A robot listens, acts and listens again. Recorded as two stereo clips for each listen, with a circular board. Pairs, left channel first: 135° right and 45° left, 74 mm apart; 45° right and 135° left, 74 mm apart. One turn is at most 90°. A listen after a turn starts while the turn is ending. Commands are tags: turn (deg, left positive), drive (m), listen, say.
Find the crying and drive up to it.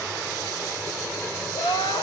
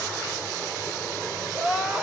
<turn deg="-90"/>
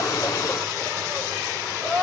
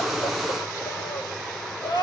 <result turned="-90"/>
<turn deg="-40"/>
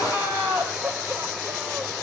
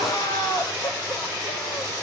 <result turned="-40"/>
<turn deg="-25"/>
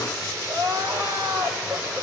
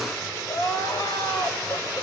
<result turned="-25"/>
<turn deg="-15"/>
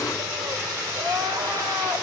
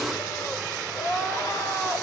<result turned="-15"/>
<drive m="1.0"/>
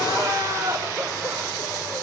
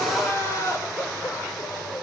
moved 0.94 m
<drive m="1.0"/>
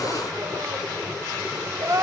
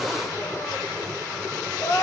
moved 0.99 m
<drive m="1.0"/>
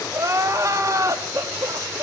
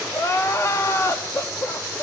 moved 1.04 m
<drive m="1.0"/>
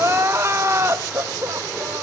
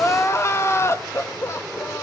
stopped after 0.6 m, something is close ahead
<say>I am next to the crying.</say>